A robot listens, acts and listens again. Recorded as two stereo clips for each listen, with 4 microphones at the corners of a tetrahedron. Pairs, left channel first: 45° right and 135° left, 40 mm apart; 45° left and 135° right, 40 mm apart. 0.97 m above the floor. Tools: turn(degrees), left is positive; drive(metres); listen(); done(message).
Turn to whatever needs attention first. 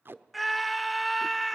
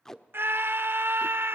turn(degrees=-135)
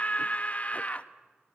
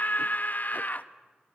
done("Facing the scream.")